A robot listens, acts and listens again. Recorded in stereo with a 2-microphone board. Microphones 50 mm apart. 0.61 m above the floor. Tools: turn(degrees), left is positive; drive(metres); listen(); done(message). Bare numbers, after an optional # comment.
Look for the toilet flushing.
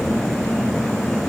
listen()
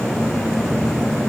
listen()
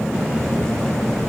done("I can't make out a toilet flushing.")